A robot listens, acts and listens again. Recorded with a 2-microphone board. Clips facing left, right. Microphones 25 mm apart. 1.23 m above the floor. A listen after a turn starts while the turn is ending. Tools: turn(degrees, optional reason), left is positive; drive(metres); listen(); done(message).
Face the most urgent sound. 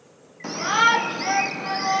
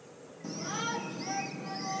turn(degrees=55, reason="The shout: about 55° left or 125° left.")
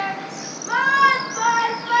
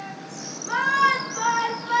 turn(degrees=15, reason="So it is at 15° left.")
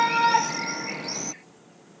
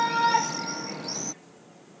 turn(degrees=10, reason="The shout is now 10° left.")
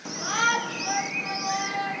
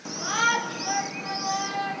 done("Found it: a shout, straight ahead.")